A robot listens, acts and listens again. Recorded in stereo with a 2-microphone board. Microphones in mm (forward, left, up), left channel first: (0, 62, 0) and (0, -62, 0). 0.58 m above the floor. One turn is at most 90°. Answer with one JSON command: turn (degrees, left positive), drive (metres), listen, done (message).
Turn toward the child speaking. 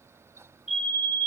{"listen": true}
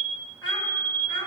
{"turn": 40}
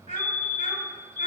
{"turn": 90}
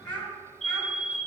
{"turn": 10}
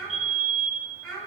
{"done": "Facing the child speaking."}